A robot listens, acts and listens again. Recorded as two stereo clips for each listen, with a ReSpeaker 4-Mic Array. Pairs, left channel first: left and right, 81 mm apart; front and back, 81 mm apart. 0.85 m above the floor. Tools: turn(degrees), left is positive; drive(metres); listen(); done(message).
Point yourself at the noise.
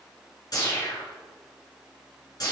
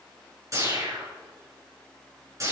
turn(degrees=130)
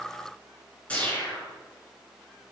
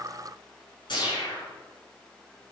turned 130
turn(degrees=15)
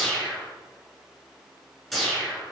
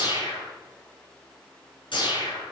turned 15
done("Facing the whoosh, over 4 m away.")